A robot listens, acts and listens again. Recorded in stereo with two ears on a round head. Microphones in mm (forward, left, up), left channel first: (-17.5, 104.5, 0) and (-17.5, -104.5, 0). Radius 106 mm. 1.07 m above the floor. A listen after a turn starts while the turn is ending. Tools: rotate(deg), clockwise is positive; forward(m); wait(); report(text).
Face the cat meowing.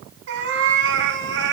rotate(60)
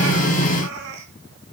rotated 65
rotate(50)
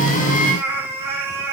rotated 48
rotate(10)
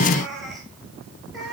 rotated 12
report("Facing the cat meowing, over 4 m away.")